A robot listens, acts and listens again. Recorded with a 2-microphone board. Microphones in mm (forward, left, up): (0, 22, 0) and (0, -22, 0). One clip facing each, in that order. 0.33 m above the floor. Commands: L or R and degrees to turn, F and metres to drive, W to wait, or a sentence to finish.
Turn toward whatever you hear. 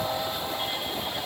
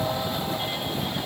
W
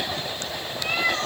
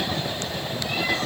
W
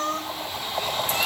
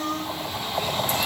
L65
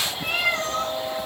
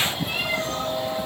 L60
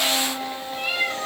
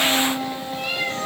L10
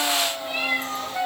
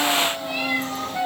Facing the cat meowing.